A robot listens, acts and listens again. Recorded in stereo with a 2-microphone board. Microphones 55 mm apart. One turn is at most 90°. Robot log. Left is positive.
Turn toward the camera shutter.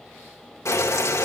cmd idle
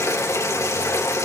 cmd idle
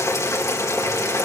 end: I can't make out a camera shutter, only boiling.